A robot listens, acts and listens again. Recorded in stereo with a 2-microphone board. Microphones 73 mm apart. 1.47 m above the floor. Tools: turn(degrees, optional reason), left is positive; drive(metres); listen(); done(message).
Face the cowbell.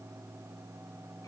listen()
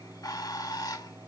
listen()
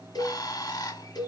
turn(degrees=60, reason="The cowbell: about 60° left or 120° left.")
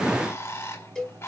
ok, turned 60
done("Found it: a cowbell, straight ahead.")